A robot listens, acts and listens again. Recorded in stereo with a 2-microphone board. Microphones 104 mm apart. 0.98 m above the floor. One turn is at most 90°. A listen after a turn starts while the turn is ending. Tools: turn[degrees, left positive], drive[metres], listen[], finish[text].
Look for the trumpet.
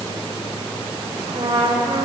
Thought: The trumpet: about 70° right or 110° right.
Action: turn[-70]
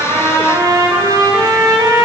Thought: So it is at 40° right.
Action: turn[-40]
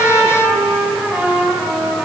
Thought: The trumpet is now 15° right.
Action: turn[-15]
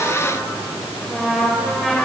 Action: finish[Found it: a trumpet, straight ahead, 2 to 4 m away.]